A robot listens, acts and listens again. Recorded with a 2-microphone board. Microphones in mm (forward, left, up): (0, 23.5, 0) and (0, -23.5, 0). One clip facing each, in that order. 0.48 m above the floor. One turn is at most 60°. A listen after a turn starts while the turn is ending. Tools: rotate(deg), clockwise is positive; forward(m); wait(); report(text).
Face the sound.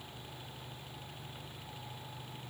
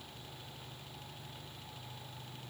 wait()
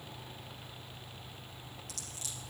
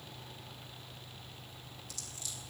rotate(-60)
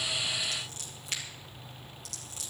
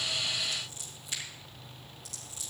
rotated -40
rotate(-60)
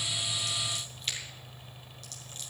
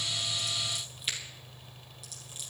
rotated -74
rotate(10)
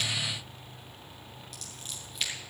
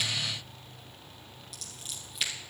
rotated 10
report("Found it: scissors, straight ahead, over 4 m away.")